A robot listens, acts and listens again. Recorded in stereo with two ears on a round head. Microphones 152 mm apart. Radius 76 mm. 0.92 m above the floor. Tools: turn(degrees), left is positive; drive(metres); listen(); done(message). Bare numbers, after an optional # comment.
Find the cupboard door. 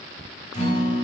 listen()
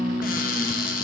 # The cupboard door: about 55° left or 125° left.
turn(55)
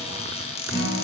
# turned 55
# So it is at 45° left.
turn(45)
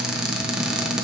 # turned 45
done("Found it: a cupboard door, straight ahead.")